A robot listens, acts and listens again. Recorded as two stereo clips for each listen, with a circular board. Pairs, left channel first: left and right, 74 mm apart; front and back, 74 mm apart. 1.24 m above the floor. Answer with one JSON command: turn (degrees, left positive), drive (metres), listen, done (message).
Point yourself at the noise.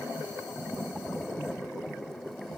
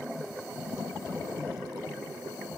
{"listen": true}
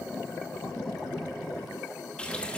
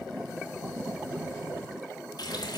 {"turn": 15}
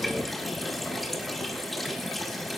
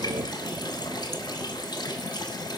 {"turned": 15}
{"done": "Found it: a running tap, straight ahead."}